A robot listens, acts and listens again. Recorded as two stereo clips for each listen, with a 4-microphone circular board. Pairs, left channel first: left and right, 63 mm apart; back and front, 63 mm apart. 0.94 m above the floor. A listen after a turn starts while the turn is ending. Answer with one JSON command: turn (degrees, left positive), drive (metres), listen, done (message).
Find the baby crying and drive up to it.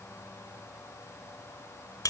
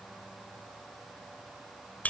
{"listen": true}
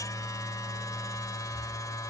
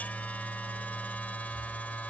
{"listen": true}
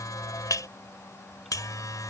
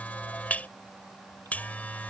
{"done": "I can't make out a baby crying to turn to."}